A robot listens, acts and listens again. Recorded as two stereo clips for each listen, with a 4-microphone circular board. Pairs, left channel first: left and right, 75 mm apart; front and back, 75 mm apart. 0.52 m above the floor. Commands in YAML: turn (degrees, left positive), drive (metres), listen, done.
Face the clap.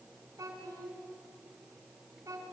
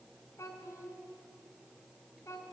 listen: true
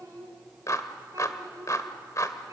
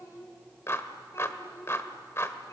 turn: 50
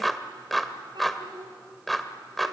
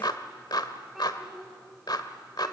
done: "Found it: a clap, straight ahead."